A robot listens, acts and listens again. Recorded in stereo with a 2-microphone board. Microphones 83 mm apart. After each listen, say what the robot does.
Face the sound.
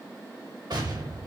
Turn 65° right.
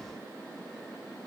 Keep listening.
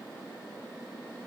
I heard an explosion, but can't make it out now. It was about straight ahead or 50° right.